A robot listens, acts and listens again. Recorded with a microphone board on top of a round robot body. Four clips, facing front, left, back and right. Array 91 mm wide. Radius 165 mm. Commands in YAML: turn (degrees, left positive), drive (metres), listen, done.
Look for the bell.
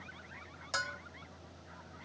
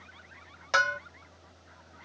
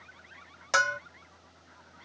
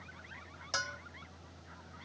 turn: 135
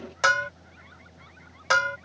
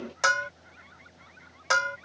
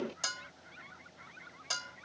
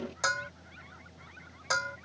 turn: 25
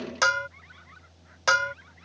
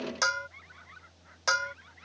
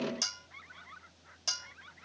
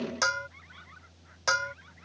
done: "Found it: a bell, straight ahead."